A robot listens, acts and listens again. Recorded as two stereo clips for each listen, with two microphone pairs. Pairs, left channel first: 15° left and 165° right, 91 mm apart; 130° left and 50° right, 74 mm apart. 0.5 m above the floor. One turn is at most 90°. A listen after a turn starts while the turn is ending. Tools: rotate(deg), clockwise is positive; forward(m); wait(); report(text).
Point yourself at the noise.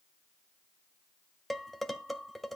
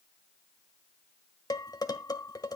rotate(-90)
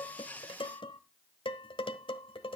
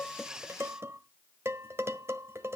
report("Found it: dishes clattering, straight ahead.")